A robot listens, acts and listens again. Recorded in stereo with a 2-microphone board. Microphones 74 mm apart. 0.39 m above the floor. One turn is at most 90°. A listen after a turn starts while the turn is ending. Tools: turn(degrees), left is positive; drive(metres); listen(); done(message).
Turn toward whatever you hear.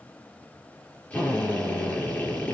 turn(degrees=20)
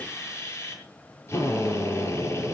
turn(degrees=90)
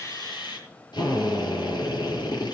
turn(degrees=70)
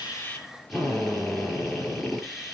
done("Found it: a drill, straight ahead, over 4 m away.")